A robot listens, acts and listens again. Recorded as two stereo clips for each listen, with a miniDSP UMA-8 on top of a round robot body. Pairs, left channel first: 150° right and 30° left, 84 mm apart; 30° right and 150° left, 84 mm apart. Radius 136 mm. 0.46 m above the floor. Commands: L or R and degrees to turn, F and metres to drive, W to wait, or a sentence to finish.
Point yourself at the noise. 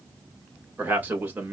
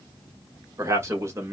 L100
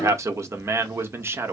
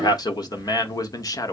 R20
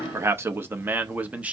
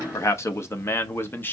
R20
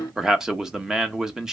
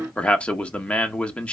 R35
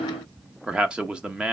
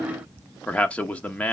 R10
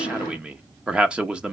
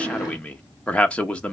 Found it: a man speaking, straight ahead, 1 to 2 m away.